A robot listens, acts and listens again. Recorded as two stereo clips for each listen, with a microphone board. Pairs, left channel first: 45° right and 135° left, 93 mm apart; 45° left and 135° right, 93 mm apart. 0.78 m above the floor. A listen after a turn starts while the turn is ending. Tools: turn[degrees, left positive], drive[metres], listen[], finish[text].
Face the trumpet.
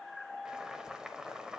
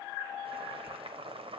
Action: listen[]
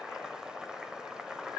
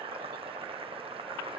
Action: listen[]
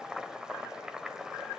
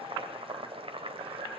Action: finish[I can't make out a trumpet, only boiling.]